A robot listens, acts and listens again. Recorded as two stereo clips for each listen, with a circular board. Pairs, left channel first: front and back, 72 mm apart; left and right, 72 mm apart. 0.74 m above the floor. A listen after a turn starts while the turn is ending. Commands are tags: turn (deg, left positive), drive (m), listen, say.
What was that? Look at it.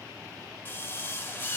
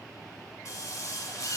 <turn deg="60"/>
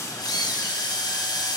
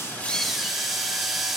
<say>Facing the drill, 1 to 2 m away.</say>